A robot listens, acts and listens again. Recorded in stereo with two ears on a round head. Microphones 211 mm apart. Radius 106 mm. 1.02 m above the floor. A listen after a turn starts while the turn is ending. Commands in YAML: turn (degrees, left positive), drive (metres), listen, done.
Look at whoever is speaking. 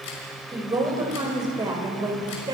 turn: -20
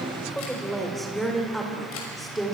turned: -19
turn: 30
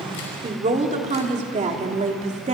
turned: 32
turn: -30
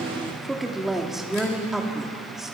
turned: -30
done: "Facing the woman speaking, 2 to 4 m away."